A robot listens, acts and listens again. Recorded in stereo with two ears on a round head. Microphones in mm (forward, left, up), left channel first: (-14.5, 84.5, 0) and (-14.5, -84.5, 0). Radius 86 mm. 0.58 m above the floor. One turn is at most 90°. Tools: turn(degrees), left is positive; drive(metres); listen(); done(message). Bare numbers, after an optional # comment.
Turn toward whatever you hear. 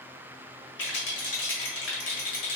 # The rattle: about 65° left or 115° left.
turn(65)
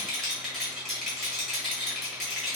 done("Facing the rattle.")